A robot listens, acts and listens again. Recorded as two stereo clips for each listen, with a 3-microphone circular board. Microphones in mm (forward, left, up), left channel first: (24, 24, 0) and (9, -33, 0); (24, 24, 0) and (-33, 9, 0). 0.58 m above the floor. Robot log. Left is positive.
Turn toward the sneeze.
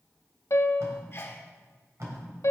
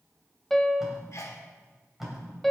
note: The sneeze: 35° left.
cmd yaw +35
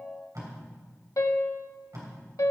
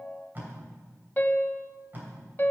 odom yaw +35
end: Facing where the sneeze came from. I can't hear it now.